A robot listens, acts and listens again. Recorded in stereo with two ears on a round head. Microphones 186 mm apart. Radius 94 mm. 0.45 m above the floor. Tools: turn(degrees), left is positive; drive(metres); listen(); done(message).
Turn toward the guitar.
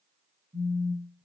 listen()
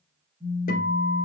turn(degrees=40)
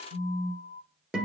done("Found it: a guitar, straight ahead, 2 to 4 m away.")